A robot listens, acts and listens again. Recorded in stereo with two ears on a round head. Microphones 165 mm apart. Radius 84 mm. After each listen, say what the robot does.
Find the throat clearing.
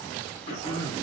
Turn 55° left.
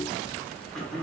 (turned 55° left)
Found it: throat clearing, straight ahead, 2 to 4 m away.